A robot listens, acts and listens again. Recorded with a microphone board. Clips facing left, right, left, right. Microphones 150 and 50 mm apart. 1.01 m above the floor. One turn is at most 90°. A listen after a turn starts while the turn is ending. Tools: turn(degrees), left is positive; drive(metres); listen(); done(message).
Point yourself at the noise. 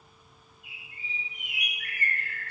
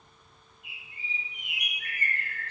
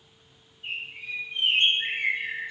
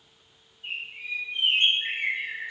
turn(degrees=55)
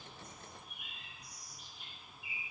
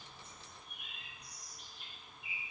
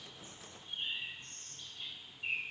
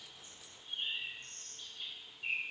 done("Facing the bird, 2 to 4 m away.")